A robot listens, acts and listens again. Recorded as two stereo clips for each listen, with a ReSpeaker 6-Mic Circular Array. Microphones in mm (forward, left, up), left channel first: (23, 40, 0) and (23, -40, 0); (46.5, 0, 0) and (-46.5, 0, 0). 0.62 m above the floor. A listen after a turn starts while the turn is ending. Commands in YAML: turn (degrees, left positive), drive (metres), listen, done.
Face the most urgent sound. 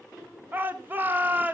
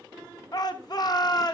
turn: -30
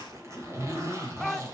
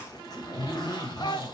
done: "Facing the shout."